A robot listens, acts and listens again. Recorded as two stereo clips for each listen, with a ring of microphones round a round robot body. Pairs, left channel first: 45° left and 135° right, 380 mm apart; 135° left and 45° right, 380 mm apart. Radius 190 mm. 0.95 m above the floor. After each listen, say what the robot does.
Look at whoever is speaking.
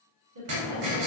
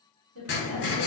Turn 95° right.
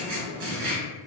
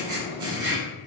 Keep listening.
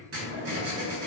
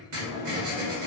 Keep listening.
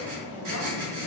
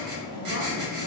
I heard a woman speaking from this way, but can't make it out now.